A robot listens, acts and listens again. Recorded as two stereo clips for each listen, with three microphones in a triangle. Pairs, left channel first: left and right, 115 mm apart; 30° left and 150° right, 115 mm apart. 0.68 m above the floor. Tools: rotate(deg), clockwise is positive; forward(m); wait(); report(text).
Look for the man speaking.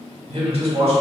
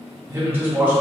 rotate(75)
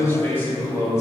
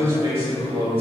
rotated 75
rotate(-35)
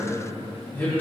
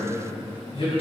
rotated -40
rotate(-20)
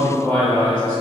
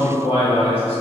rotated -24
rotate(-15)
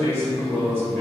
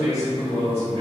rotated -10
rotate(-15)
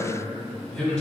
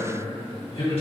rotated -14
report("Found it: a man speaking, straight ahead, 2 to 4 m away.")